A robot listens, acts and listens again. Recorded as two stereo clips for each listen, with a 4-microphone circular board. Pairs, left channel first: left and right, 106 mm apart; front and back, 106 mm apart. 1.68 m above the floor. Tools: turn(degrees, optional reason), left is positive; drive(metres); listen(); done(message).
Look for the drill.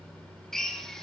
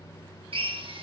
turn(degrees=175, reason="The drill: 175° left.")
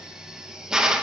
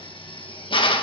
turn(degrees=-10, reason="The drill is now 10° right.")
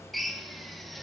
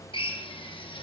done("Facing the drill.")